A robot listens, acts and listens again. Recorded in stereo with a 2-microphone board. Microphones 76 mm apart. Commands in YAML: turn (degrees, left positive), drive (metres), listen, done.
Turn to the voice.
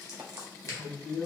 turn: 15
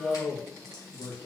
turn: 150
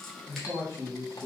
turn: 35
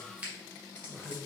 turn: 10
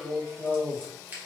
done: "Facing the man speaking, 2 to 4 m away."